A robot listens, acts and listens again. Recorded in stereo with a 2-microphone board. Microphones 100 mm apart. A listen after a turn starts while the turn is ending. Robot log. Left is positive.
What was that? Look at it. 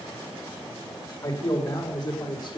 note: The man speaking: about 45° left or 135° left.
cmd yaw +45
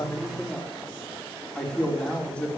note: So it is at 15° left.
cmd yaw +15
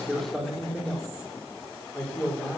note: The man speaking is now 10° left.
cmd yaw +10
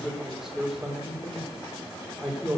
end: Facing the man speaking.